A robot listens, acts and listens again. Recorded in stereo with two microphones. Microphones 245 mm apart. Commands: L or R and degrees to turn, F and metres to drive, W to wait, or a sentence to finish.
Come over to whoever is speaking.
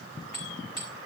W
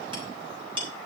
W
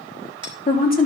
L35
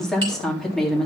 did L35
F1.0
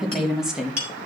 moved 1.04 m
F1.0
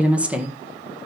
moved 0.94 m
F1.0
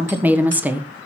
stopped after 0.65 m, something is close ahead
Arrived at the woman speaking, straight ahead.